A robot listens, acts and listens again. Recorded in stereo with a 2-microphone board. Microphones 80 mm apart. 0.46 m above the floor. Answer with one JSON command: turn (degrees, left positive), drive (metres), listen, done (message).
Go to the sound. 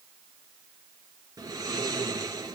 {"turn": -45}
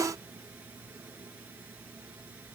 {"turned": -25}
{"turn": -20}
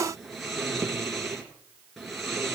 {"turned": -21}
{"drive": 1.0}
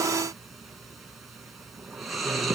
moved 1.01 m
{"drive": 1.0}
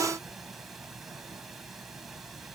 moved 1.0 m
{"drive": 1.0}
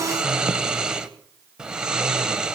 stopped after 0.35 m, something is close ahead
{"turn": -10}
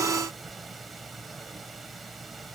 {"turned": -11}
{"done": "Arrived at the snoring, straight ahead."}